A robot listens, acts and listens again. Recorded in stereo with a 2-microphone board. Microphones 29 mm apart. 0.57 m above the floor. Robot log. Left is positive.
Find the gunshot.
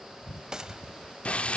note: The gunshot: about 25° right or 155° right.
cmd yaw -25
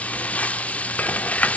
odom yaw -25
cmd idle
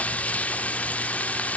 end: I heard a gunshot, but can't make it out now. It was about straight ahead or 130° right.